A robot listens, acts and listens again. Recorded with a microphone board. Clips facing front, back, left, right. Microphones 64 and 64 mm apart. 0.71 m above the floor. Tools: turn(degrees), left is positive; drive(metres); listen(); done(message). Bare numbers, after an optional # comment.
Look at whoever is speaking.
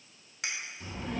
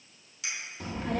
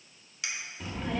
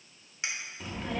# The child speaking: straight behind.
turn(180)
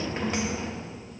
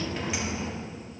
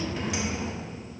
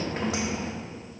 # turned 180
# The child speaking is now 55° right.
turn(-55)
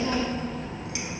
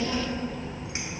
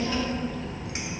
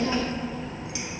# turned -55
# The child speaking is now 30° right.
turn(-30)
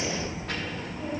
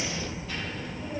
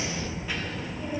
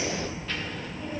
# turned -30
# The child speaking is now 10° left.
turn(10)
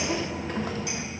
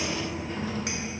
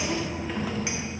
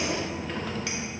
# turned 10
done("Found it: a child speaking, straight ahead, under 1 m away.")